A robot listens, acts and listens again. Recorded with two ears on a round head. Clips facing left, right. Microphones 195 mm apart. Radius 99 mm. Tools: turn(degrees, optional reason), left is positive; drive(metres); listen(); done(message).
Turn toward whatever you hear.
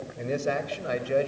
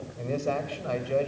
turn(degrees=20, reason="The man speaking: about 20° left or 160° left.")
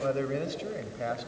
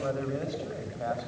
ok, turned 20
turn(degrees=35, reason="The man speaking: about 35° left or 145° left.")
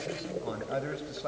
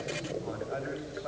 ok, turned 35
turn(degrees=125, reason="So it is at 125° left.")
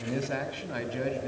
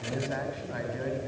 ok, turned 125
turn(degrees=40, reason="The man speaking is now 40° left.")
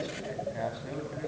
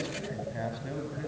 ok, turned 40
done("Found it: a man speaking, straight ahead, over 4 m away.")